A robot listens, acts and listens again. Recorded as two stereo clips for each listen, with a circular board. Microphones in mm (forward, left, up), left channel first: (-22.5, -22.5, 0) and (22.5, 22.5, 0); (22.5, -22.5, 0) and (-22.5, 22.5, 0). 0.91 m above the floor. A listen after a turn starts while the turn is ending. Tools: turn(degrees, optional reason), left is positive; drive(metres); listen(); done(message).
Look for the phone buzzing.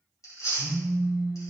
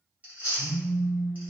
turn(degrees=-95, reason="The phone buzzing: 95° right.")
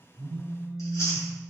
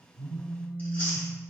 turn(degrees=-35, reason="The phone buzzing is now 35° right.")
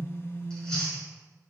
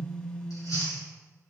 turn(degrees=10, reason="The phone buzzing is now 10° left.")
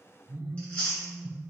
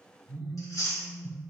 done("Facing the phone buzzing.")